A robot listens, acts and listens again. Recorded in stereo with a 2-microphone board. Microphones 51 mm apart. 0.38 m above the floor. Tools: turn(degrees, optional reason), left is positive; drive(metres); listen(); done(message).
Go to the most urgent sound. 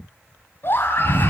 turn(degrees=50, reason="The scream: about 50° left or 130° left.")
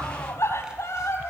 turn(degrees=75, reason="So it is at 75° left.")
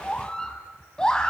turn(degrees=15, reason="The scream is now 15° left.")
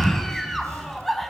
drive(metres=1.0)
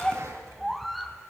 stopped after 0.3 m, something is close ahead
done("Something is in my way. I am facing the scream but have not reached it.")